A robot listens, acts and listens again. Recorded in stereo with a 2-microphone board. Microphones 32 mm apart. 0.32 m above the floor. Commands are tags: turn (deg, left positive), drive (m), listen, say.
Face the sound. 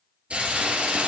<turn deg="-40"/>
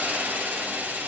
<turn deg="-100"/>
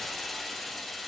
<say>Found it: a hiss, straight ahead, 1 to 2 m away.</say>